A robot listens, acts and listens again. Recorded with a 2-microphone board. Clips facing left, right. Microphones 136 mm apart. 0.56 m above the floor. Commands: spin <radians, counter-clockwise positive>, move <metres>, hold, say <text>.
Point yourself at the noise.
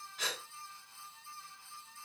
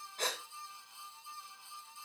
spin -0.87
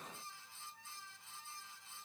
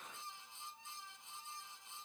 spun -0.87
hold
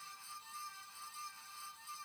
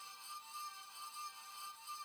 say I heard a gasp, but can't make it out now. It was about straight ahead or 80° right.